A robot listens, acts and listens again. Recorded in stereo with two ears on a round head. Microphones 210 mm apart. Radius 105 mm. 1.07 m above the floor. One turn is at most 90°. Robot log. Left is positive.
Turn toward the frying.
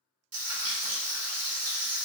note: The frying: about 70° right or 110° right.
cmd yaw -70
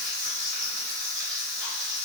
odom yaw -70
end: Facing the frying, under 1 m away.